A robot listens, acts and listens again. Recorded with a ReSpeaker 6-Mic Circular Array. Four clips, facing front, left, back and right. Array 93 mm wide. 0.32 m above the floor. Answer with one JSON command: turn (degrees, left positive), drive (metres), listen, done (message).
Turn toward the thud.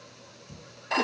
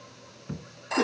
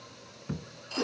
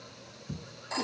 {"turn": 150}
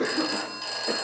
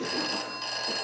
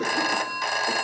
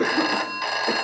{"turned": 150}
{"done": "I heard a thud from this way, but can't make it out now."}